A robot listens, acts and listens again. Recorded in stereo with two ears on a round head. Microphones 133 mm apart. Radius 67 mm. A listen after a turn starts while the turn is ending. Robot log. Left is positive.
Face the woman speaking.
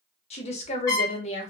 note: The woman speaking: about 45° left or 135° left.
cmd yaw +45
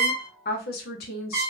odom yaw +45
note: So it is at 85° left.
cmd yaw +85
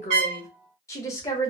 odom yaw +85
note: The woman speaking is now 20° left.
cmd yaw +20
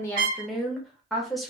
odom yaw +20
end: Facing the woman speaking.